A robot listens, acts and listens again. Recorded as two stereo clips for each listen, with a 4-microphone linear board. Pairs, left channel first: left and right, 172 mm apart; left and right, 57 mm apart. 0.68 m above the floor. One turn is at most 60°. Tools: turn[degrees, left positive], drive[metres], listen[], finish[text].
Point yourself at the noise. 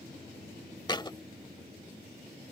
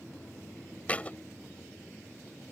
Thought: The thud: about 25° left or 155° left.
Action: turn[25]
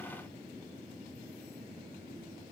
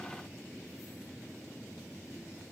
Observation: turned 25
Action: listen[]
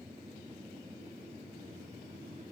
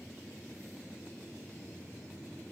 Action: finish[I heard a thud, but can't make it out now. It was about straight ahead or 130° left.]